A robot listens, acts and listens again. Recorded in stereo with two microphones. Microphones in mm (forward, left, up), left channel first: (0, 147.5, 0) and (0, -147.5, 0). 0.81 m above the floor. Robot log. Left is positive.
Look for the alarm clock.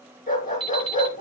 note: The alarm clock: about 60° right or 120° right.
cmd yaw -60
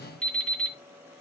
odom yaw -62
end: Found it: an alarm clock, straight ahead.